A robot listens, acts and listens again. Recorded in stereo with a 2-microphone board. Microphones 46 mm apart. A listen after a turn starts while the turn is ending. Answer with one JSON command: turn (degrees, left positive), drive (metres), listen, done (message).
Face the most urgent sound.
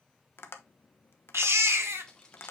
{"turn": -70}
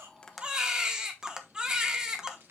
{"turn": -15}
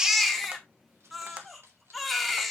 {"done": "Facing the baby crying."}